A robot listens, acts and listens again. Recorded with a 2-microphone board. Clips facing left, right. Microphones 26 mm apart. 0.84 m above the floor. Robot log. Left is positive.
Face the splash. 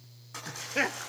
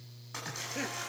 cmd yaw -30
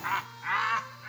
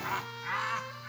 cmd idle
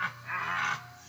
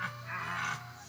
end: I heard a splash, but can't make it out now. It was about 20° left or 140° right.